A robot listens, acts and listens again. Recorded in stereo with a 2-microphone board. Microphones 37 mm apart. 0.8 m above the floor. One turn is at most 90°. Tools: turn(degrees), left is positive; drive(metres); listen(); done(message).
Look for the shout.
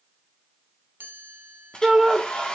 turn(degrees=-15)
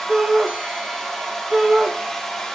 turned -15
turn(degrees=-90)
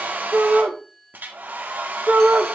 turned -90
turn(degrees=-70)
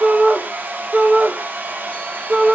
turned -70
turn(degrees=-30)
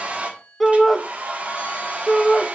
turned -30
done("Facing the shout.")